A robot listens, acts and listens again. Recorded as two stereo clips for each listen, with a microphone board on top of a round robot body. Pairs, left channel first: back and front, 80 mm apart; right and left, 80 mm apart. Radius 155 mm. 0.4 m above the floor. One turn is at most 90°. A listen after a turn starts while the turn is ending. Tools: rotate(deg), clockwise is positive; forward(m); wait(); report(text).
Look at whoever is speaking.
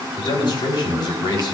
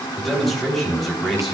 rotate(-90)
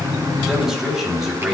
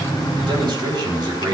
rotate(-85)
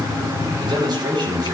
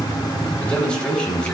rotate(15)
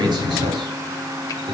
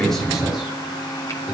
wait()
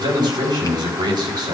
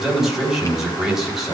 report("Facing the man speaking, over 4 m away.")